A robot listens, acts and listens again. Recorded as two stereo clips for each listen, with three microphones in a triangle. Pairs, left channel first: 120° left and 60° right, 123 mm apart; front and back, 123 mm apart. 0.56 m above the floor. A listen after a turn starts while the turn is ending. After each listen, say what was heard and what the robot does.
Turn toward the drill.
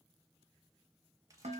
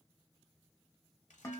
Keep listening.
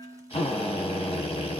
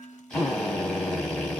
The drill: 85° left. Turn 85° left.
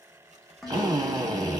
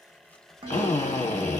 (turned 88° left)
Found it: a drill, straight ahead.